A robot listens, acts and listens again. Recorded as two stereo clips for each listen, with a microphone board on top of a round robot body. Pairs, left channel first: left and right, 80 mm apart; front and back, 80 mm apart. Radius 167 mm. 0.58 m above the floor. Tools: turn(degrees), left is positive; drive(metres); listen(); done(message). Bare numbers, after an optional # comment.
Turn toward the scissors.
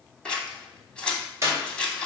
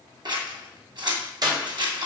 # The scissors: 170° left.
turn(170)
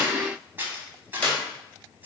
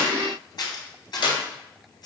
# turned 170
# The scissors is now 25° right.
turn(-25)
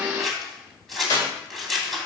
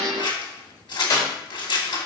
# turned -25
done("Facing the scissors.")